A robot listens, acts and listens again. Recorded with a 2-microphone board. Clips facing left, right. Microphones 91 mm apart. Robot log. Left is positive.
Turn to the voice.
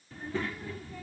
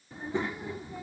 note: The child speaking: about 20° right or 160° right.
cmd yaw -20
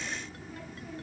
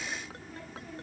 end: Found it: a child speaking, straight ahead.